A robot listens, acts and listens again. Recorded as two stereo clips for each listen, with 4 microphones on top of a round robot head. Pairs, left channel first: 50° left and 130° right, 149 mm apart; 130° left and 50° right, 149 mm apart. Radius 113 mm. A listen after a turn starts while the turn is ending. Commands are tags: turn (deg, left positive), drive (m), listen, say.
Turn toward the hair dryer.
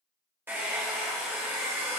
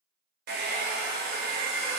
<turn deg="-55"/>
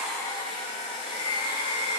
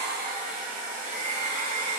<turn deg="-10"/>
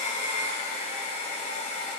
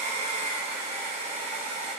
<say>Facing the hair dryer, 1 to 2 m away.</say>